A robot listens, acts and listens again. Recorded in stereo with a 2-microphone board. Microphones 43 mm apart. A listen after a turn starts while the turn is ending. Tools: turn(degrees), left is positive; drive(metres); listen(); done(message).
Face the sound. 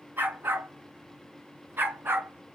turn(degrees=-60)
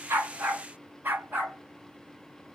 turn(degrees=-45)
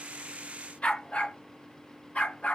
turn(degrees=30)
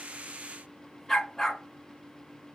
done("Facing the dog barking.")